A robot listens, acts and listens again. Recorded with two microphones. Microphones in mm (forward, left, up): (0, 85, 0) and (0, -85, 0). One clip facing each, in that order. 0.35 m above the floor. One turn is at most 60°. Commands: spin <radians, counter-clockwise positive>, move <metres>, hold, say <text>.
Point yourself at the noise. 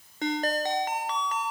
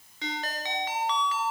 spin 0.87
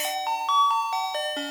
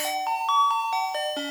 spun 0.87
say Found it: a ringtone, straight ahead, 1 to 2 m away.